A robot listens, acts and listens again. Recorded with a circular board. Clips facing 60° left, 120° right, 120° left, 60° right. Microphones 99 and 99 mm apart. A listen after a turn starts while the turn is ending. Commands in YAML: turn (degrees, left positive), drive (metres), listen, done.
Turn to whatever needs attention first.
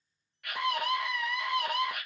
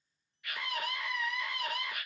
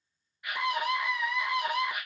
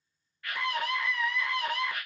turn: 45
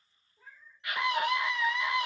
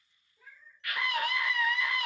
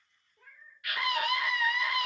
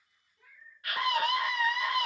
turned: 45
turn: -10
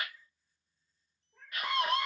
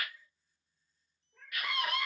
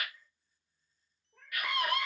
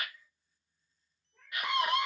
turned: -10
done: "Facing the scream."